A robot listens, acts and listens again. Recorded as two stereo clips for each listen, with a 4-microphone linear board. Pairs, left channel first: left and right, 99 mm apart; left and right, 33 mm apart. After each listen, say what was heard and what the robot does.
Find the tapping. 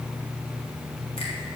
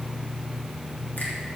Keep listening.
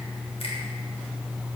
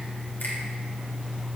Keep listening.
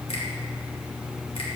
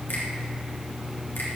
I can't make out tapping.